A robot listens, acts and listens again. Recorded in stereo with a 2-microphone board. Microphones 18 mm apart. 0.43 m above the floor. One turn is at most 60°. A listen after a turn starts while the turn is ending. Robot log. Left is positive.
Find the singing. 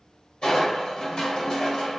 cmd idle
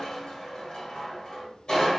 cmd idle
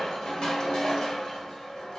end: I can't make out singing to turn to.